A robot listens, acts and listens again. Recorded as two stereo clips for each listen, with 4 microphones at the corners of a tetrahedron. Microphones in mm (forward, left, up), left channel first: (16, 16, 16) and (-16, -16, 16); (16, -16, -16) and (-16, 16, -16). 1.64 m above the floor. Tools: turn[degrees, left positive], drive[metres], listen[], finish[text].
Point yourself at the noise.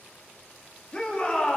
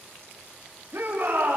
Thought: The shout: 105° left.
Action: turn[105]
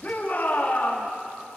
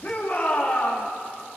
Action: finish[Found it: a shout, straight ahead, over 4 m away.]